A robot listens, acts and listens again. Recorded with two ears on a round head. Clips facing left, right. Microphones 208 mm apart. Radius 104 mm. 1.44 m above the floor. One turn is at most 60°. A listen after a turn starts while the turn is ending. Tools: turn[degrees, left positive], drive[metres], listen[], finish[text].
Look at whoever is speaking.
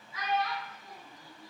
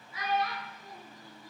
Thought: The child speaking: about 50° right or 130° right.
Action: turn[-50]
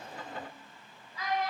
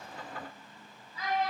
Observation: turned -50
Thought: So it is at 80° right.
Action: turn[-60]
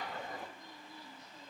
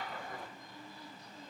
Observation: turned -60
Thought: Nothing new. It was at 20° right.
Action: turn[-20]
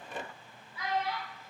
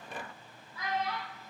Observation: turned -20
Thought: The child speaking is now 15° left.
Action: turn[15]
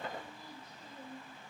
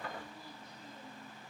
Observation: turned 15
Action: listen[]
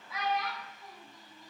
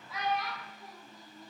Action: finish[Found it: a child speaking, straight ahead, 1 to 2 m away.]